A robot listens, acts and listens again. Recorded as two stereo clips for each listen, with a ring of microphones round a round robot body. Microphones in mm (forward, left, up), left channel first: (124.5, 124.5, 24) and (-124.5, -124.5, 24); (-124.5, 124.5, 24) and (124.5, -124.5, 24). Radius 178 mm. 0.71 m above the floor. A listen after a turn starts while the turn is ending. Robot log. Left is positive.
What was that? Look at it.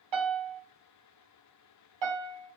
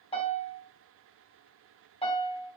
note: The piano: 150° right.
cmd yaw -150
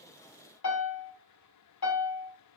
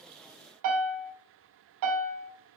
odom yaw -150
end: Facing the piano.